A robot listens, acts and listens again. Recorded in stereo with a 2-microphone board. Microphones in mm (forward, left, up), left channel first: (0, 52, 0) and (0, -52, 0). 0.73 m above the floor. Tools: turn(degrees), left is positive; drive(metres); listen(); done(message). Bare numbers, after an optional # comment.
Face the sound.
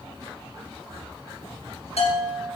turn(90)
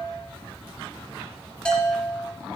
# So it is at 10° left.
turn(10)
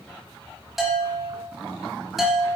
done("Found it: a bell, straight ahead, 2 to 4 m away.")